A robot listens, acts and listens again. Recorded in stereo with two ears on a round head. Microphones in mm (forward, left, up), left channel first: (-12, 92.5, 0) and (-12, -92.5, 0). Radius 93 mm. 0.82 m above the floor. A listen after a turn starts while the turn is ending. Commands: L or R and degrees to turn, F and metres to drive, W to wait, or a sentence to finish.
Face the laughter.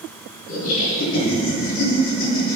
L70
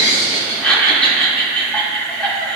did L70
Facing the laughter.